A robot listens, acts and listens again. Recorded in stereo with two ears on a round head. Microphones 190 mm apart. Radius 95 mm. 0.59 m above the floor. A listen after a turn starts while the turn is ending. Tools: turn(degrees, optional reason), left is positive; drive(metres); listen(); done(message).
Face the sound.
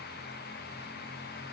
listen()
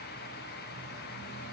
listen()
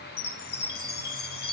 turn(degrees=50, reason="The chime: about 50° left or 130° left.")
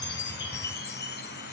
turn(degrees=65, reason="So it is at 65° left.")
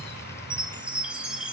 done("Facing the chime.")